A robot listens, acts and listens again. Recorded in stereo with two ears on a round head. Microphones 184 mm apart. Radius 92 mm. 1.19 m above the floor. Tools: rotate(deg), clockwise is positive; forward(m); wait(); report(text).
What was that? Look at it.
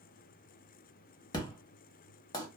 rotate(-20)
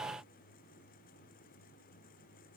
wait()
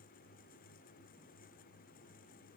report("I heard an explosion, but can't make it out now. It was about straight ahead or 140° left.")